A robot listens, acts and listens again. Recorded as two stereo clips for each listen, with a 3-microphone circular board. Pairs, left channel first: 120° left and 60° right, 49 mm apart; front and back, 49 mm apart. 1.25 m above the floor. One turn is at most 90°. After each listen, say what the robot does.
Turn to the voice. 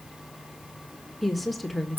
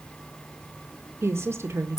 Turn 90° right.
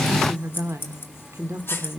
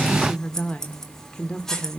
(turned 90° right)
Turn 65° right.
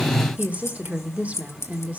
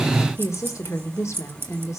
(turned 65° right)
Found it: a woman speaking, straight ahead.